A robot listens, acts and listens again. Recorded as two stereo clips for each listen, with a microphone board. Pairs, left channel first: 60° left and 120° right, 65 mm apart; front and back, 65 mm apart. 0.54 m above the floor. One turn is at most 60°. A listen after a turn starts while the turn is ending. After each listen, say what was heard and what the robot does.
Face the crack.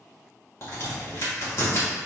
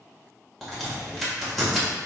The crack: 90° left. Turn 60° left.
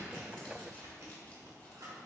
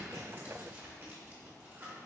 Nothing new. It was at 30° left. Turn 30° left.
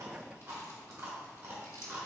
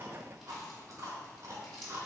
Facing where the crack came from. I can't hear it now.